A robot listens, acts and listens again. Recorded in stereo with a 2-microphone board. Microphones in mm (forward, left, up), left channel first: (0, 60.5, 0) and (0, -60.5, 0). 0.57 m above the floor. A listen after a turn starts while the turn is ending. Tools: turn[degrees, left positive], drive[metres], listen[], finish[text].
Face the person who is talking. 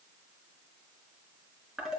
Action: listen[]
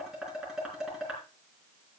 Action: listen[]
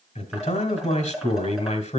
Thought: The man speaking: about 70° left or 110° left.
Action: turn[70]
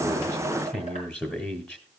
Thought: So it is at 15° left.
Action: turn[15]
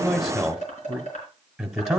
Action: finish[Facing the man speaking, 1 to 2 m away.]